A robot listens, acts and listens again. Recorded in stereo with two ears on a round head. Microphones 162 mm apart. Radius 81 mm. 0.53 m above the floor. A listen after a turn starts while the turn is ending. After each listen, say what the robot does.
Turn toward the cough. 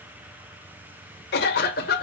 Turn 60° left.
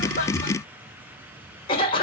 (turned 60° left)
Turn 35° left.
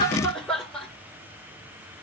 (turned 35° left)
Found it: a cough, straight ahead, 1 to 2 m away.